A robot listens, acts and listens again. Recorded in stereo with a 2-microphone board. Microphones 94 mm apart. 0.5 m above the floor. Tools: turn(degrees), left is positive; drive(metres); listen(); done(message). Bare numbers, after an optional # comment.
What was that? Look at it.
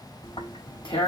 # The tearing paper: about 70° left or 110° left.
turn(70)
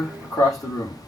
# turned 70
# So it is at 40° left.
turn(40)
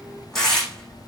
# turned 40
done("Found it: tearing paper, straight ahead.")